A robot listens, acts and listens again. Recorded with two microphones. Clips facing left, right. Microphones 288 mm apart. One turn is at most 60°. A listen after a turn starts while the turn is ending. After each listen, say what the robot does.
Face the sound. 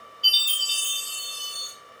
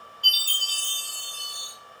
Turn 55° right.
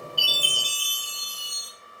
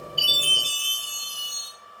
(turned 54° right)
Facing the chime, 1 to 2 m away.